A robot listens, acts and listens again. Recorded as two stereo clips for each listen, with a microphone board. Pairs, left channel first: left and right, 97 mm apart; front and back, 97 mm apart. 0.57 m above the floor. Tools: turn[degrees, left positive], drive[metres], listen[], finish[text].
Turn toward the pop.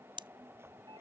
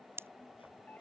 Thought: The pop: 115° right.
Action: turn[-115]
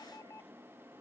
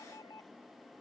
Action: finish[Facing where the pop came from. I can't hear it now.]